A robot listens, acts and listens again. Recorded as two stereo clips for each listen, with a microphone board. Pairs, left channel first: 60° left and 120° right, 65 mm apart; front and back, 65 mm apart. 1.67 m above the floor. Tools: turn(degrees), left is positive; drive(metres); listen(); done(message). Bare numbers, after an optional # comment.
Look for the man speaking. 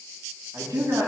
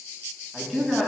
# The man speaking: 90° right.
turn(-90)
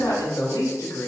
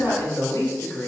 # The man speaking is now 45° left.
turn(45)
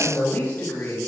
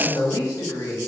done("Facing the man speaking, 2 to 4 m away.")